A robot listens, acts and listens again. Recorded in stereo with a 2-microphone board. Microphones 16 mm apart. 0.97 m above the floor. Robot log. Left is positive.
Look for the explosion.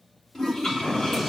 note: The explosion: about 60° left or 120° left.
cmd yaw +60
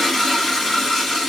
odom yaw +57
cmd idle
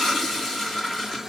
end: I heard an explosion, but can't make it out now. It was about 5° left or 65° left.